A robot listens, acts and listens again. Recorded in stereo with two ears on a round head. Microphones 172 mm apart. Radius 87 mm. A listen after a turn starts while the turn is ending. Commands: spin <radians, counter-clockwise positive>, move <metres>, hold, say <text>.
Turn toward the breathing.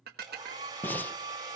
spin 0.52
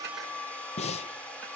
spin 2.44
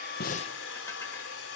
hold
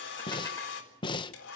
spin 0.52
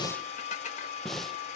say Facing the breathing.